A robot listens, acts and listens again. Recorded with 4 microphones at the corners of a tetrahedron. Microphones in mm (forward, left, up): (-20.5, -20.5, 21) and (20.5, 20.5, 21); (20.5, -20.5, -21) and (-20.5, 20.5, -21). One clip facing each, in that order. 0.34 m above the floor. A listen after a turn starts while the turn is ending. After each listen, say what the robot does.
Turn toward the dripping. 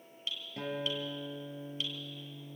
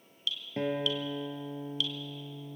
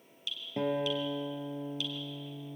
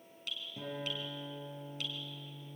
Turn 170° left.
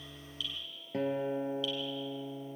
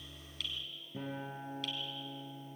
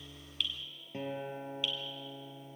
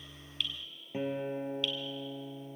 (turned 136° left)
Turn 35° left.
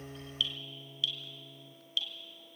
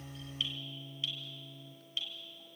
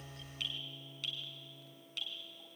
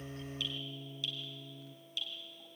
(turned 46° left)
Turn 10° right.
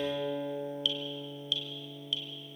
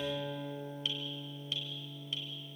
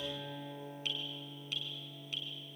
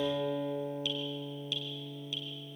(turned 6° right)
Found it: dripping, straight ahead, 2 to 4 m away.